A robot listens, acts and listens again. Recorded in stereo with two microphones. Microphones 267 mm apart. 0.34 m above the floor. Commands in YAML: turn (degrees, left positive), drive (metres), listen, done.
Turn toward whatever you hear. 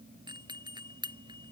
turn: -15
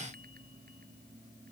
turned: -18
listen: true
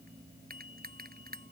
turn: -145
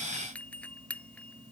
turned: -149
done: "Found it: a doorbell, straight ahead."